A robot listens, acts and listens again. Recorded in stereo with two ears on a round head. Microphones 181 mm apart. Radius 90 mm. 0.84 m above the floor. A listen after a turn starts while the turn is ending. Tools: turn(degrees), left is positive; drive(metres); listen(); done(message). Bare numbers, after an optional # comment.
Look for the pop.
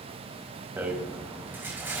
listen()
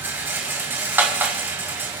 listen()
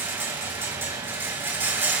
done("I can't make out a pop, only a rattle.")